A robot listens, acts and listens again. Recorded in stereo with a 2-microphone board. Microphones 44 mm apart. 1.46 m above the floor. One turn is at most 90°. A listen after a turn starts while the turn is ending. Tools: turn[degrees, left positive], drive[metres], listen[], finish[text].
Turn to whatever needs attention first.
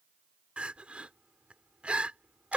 Thought: The crying: about 30° right or 150° right.
Action: turn[-30]
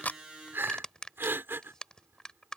Thought: So it is at 120° right.
Action: turn[-90]
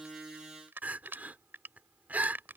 Thought: The crying is now 40° right.
Action: turn[-40]
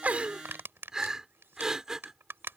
Thought: The crying is now 15° right.
Action: turn[-15]
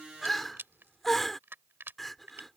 Action: finish[Found it: crying, straight ahead.]